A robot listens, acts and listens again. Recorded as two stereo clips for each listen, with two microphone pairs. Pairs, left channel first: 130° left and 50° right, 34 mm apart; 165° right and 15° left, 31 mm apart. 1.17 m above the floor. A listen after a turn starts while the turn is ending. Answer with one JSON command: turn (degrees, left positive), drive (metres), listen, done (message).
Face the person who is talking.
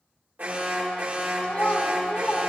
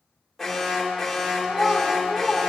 {"turn": 85}
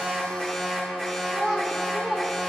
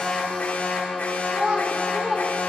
{"turn": 30}
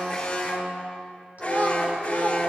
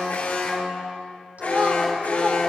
{"turn": -10}
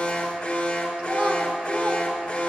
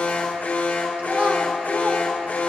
{"listen": true}
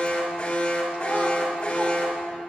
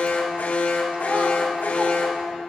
{"listen": true}
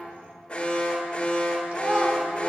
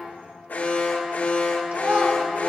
{"done": "Found it: a child speaking, straight ahead."}